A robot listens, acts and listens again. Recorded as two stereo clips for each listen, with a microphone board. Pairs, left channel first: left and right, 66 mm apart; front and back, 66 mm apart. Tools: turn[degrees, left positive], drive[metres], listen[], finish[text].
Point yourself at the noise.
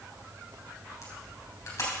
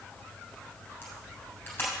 Thought: The camera shutter: 55° left.
Action: turn[55]
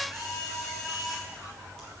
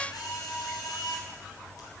Action: finish[Found it: a camera shutter, straight ahead.]